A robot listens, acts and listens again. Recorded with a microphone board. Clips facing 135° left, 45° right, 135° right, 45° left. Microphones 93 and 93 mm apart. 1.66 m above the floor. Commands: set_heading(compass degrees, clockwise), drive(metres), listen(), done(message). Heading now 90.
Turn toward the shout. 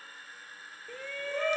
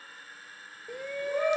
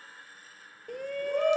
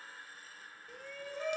set_heading(210)
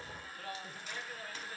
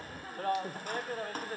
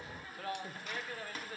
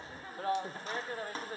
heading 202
set_heading(212)
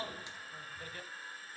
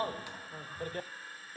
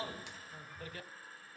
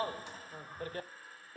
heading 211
done("Facing the shout.")